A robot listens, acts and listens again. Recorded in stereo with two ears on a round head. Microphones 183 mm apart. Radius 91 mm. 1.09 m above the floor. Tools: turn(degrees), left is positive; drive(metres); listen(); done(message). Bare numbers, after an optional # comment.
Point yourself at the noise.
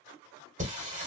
# The singing: about 35° right or 145° right.
turn(-35)
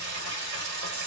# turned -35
# So it is at 100° right.
turn(-100)
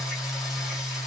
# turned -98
done("Found it: singing, straight ahead.")